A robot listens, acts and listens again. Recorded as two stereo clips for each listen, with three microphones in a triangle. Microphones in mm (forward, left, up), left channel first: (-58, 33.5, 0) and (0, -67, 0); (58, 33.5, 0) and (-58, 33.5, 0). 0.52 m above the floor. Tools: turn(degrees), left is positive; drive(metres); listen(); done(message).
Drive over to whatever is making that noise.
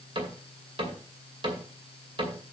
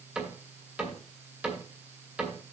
turn(degrees=-100)
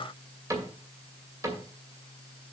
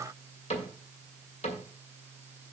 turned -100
drive(metres=1.0)
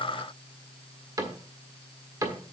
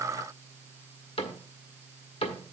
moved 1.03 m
turn(degrees=-10)
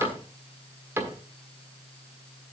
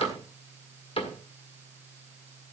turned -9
drive(metres=1.0)
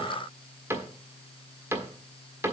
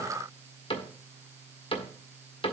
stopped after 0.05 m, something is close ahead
done("Arrived at the cupboard door, straight ahead.")